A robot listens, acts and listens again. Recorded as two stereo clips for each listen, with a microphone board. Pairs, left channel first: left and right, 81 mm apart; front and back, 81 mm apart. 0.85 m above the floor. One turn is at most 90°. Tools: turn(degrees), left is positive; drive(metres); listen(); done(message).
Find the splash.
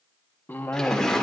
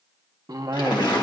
done("Facing the splash.")